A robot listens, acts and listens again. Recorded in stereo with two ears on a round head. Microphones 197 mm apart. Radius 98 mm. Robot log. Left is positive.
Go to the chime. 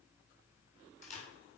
cmd idle
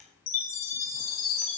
note: The chime: about 70° left or 110° left.
cmd yaw +70
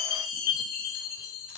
note: So it is at 40° left.
cmd yaw +40
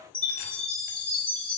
cmd fwd 1.0
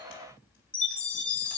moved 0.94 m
cmd fwd 1.0
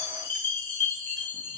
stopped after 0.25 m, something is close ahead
note: The chime is now 10° left.
cmd yaw +10
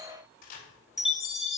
end: Something is in my way. I am facing the chime but have not reached it.